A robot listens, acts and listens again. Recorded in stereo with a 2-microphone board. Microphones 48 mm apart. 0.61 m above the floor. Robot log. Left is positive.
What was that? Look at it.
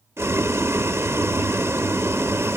cmd yaw -90
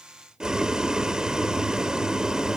note: So it is at 15° right.
cmd yaw -15
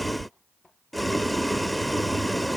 end: Facing the boiling.